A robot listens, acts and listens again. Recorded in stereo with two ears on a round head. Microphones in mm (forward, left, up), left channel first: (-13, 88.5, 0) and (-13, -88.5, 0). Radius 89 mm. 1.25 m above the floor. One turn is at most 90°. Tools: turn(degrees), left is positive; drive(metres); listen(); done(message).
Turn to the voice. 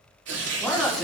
turn(degrees=30)
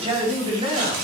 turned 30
turn(degrees=-30)
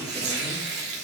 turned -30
listen()
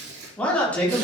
done("Facing the man speaking, over 4 m away.")